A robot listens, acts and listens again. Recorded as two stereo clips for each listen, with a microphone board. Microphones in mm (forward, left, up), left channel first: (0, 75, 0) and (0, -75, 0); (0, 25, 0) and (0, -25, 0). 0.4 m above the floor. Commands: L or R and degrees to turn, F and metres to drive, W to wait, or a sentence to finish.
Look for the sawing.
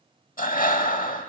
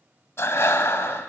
W
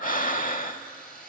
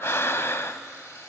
L90
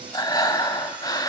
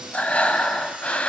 W
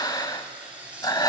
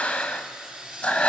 R10
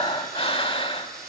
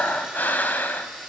W
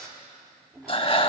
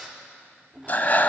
Found it: sawing, straight ahead, 2 to 4 m away.